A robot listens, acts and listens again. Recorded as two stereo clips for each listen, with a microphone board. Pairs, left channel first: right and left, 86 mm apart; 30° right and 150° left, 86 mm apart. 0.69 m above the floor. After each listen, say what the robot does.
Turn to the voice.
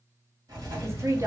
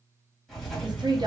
Turn 140° left.
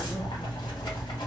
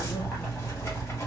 Keep listening.
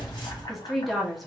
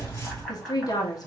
Found it: a woman speaking, straight ahead, under 1 m away.